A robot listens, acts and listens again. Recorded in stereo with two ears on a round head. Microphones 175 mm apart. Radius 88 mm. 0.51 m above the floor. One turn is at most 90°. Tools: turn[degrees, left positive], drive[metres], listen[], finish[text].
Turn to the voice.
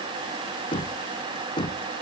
Action: listen[]
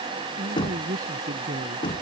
Thought: The man speaking: about 45° right or 135° right.
Action: turn[-45]
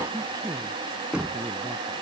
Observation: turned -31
Thought: So it is at 20° right.
Action: turn[-20]
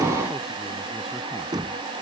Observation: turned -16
Action: listen[]
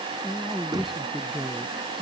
Action: finish[Facing the man speaking.]